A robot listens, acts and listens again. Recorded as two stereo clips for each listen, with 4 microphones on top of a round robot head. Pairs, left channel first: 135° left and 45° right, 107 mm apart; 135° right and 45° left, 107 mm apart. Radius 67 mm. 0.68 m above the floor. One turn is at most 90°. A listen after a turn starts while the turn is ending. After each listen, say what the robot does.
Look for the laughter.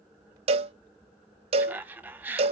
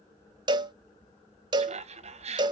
Turn 30° left.
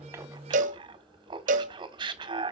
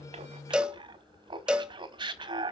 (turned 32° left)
Found it: laughter, straight ahead, 1 to 2 m away.